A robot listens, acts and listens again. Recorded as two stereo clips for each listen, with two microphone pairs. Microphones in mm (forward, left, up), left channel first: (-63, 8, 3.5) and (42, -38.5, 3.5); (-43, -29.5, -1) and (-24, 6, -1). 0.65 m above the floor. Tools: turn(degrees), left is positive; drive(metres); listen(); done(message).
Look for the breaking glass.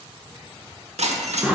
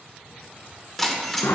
turn(degrees=-35)
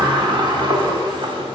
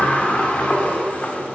done("Facing where the breaking glass came from. I can't hear it now.")